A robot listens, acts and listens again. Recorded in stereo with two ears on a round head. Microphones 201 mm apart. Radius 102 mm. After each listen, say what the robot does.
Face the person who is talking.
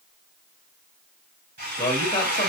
Turn 30° left.
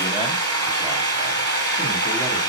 Keep listening.
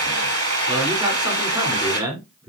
Turn 20° right.
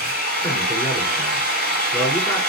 Facing the man speaking.